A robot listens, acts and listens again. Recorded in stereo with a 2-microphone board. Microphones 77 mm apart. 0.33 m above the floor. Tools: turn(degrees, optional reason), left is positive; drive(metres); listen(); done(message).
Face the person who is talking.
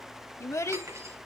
turn(degrees=40, reason="The child speaking: about 40° left or 140° left.")
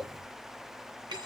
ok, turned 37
done("Facing the child speaking.")